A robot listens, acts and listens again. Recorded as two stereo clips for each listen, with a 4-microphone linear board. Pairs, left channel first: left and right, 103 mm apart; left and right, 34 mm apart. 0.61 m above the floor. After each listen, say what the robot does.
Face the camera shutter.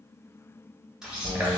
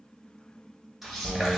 Turn 30° right.
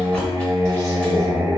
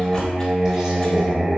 Keep listening.
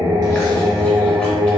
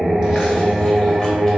Keep listening.
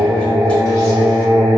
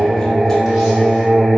I heard a camera shutter, but can't make it out now. It was about 25° left or 145° right.